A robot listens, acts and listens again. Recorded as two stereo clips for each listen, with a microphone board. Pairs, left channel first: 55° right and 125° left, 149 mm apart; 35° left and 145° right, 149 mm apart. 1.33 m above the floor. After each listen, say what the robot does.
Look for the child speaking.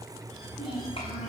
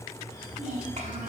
Turn 110° right.
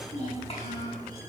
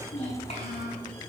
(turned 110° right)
Turn 10° right.
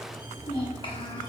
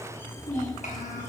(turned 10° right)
Found it: a child speaking, straight ahead, over 4 m away.